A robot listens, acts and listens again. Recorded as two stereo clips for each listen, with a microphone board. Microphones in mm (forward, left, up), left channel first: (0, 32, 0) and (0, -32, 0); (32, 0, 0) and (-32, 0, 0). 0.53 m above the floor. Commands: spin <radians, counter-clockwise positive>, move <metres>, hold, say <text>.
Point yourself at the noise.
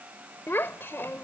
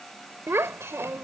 spin 2.44
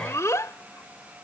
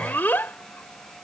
spin 0.96
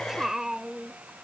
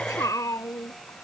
spin -0.17
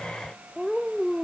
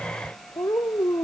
say Facing the child speaking.